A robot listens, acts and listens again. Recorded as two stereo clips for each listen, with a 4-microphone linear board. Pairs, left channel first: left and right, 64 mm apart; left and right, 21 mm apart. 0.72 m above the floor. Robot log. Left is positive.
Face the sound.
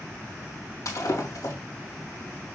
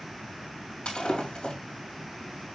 cmd yaw +90
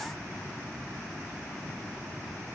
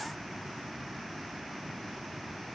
end: I heard breaking glass from this way, but can't make it out now.